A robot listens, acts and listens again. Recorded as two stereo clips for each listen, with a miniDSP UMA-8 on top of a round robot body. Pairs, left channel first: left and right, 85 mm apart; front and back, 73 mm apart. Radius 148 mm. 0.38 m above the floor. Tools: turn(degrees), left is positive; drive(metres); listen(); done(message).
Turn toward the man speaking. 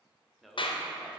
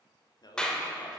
done("Facing the man speaking.")